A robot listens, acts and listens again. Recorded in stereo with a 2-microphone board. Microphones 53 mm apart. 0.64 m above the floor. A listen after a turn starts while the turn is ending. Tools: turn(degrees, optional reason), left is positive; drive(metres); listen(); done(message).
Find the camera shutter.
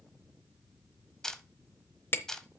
turn(degrees=30)
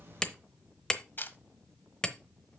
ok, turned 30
turn(degrees=135, reason="So it is at 135° left.")
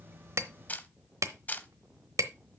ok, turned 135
turn(degrees=35, reason="The camera shutter is now 35° left.")
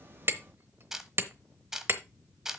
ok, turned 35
turn(degrees=-10, reason="The camera shutter is now 10° right.")
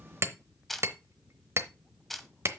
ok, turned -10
done("Found it: a camera shutter, straight ahead.")